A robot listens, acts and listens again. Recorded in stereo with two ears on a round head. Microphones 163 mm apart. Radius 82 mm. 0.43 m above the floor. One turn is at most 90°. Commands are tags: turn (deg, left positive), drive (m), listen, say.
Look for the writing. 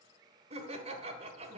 <listen/>
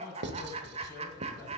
<turn deg="-65"/>
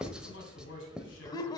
<say>Found it: writing, straight ahead.</say>